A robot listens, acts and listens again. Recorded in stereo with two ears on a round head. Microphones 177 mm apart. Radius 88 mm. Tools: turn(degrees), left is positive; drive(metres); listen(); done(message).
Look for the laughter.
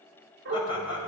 turn(degrees=25)
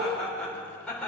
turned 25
done("Found it: laughter, straight ahead, over 4 m away.")